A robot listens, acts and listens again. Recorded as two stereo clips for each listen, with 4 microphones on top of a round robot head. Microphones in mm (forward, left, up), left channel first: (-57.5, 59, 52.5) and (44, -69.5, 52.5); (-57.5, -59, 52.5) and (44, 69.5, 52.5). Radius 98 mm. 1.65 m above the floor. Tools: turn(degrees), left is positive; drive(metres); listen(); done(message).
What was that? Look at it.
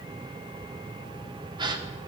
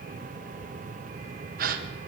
turn(degrees=15)
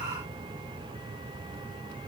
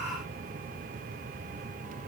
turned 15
done("Facing where the gasp came from. I can't hear it now.")